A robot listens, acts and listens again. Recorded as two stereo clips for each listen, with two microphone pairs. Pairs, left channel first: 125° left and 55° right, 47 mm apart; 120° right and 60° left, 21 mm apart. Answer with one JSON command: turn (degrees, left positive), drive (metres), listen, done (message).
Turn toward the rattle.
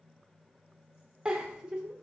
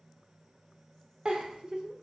{"listen": true}
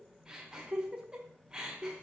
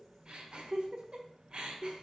{"listen": true}
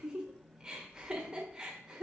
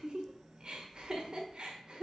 {"done": "I can't make out a rattle, only a giggle."}